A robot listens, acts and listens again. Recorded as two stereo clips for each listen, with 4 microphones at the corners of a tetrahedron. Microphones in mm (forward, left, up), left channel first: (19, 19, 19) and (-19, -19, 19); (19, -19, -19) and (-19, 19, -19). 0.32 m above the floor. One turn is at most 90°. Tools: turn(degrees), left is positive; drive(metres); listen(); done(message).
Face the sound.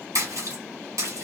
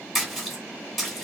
turn(degrees=-90)
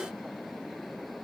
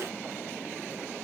turn(degrees=-45)
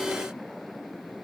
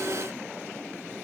done("Facing where the splash came from. I can't hear it now.")